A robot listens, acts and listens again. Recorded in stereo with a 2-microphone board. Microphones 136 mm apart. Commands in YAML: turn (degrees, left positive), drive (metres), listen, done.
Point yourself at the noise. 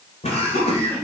turn: 50
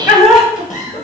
turn: 85
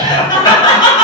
turn: 35
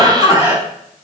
turn: -25
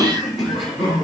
done: "Found it: laughter, straight ahead, over 4 m away."